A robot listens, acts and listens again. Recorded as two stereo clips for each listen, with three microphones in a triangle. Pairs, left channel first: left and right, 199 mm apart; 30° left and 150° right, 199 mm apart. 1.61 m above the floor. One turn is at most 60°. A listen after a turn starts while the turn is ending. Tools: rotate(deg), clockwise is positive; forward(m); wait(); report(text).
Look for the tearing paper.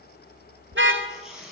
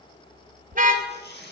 report("Found it: tearing paper, straight ahead, over 4 m away.")